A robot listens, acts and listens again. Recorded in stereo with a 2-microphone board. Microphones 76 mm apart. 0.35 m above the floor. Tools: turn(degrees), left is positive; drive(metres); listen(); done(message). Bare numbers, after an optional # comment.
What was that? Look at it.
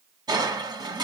# The crushing: about 75° right or 105° right.
turn(-75)
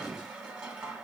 # So it is at 15° right.
turn(-15)
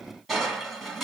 done("Facing the crushing.")